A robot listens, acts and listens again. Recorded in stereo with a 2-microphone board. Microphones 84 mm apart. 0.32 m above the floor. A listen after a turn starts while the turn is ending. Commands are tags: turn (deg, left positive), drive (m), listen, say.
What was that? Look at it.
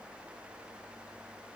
<listen/>
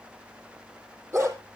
<turn deg="-30"/>
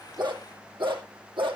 <turn deg="-105"/>
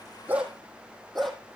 <say>Facing the dog barking, 2 to 4 m away.</say>